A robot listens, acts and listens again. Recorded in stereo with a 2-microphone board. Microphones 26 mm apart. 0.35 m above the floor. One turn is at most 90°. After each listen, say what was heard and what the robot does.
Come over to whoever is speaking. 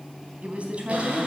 The woman speaking: about 55° right or 125° right. Turn 55° right.
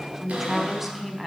Drive 1.0 m forward.
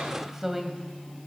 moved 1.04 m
The woman speaking is now 15° right. Turn 15° right.
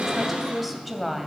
Drive 1.0 m forward.
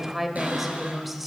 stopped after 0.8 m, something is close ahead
Arrived at the woman speaking, straight ahead.